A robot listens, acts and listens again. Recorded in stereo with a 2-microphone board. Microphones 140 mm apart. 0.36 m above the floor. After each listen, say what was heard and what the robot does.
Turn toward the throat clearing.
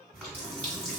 Keep listening.
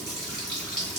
Keep listening.
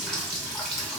I can't make out throat clearing, only a running tap.